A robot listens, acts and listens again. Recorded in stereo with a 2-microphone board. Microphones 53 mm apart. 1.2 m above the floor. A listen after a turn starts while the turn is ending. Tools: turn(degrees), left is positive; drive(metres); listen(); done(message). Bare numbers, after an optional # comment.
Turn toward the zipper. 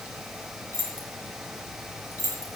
listen()
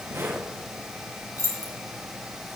# The zipper: about 75° right or 105° right.
turn(-75)
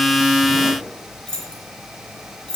listen()
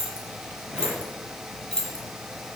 listen()
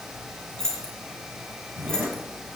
# So it is at 25° right.
turn(-25)
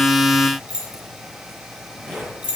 # The zipper is now 20° left.
turn(20)
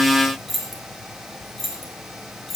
listen()
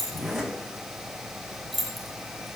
done("Found it: a zipper, straight ahead.")